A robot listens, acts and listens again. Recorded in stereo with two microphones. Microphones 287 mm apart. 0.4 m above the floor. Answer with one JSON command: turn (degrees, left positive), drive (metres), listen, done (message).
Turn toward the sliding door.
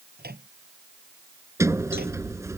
{"turn": -30}
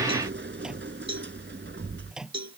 {"turn": -140}
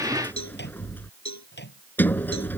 {"done": "Facing the sliding door."}